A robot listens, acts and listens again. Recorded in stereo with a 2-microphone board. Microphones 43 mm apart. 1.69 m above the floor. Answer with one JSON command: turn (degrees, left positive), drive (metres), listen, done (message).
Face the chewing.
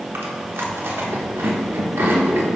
{"turn": -60}
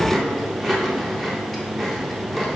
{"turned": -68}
{"done": "Found it: chewing, straight ahead, under 1 m away."}